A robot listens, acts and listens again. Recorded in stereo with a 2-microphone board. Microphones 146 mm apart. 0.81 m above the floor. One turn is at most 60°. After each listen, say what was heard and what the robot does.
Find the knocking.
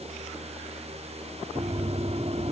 The knocking: about 50° right or 130° right. Turn 50° right.
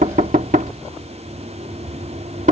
So it is at 75° right. Turn 60° right.
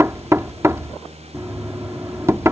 The knocking is now 20° right. Turn 20° right.
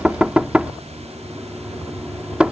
The knocking is now 10° right. Turn 10° right.
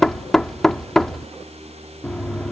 Facing the knocking.